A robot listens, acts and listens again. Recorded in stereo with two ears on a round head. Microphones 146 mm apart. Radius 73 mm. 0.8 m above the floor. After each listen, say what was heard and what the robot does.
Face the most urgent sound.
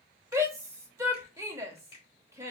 The shout: about 20° right or 160° right. Turn 20° right.
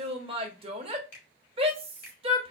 So it is at 140° right. Turn 140° right.
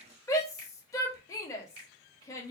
The shout is now 20° left. Turn 20° left.
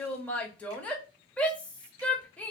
The shout is now 10° left. Turn 10° left.
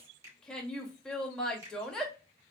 Facing the shout, 1 to 2 m away.